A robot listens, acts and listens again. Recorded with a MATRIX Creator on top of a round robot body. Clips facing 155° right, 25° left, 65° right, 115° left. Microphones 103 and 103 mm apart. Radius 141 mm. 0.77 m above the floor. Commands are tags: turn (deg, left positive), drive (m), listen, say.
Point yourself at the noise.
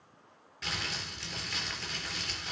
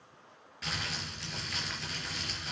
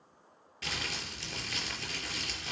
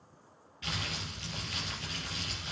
<turn deg="-65"/>
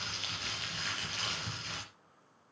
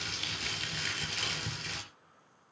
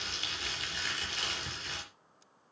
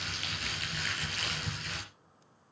<say>Found it: crumpling, straight ahead.</say>